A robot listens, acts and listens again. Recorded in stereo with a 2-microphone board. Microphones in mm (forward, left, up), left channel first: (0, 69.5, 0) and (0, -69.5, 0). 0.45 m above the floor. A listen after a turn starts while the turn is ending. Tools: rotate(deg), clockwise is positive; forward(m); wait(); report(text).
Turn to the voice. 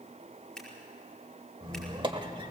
wait()
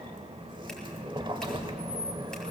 wait()
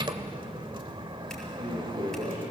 rotate(65)
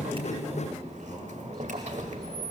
wait()
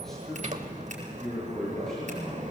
report("Facing the man speaking.")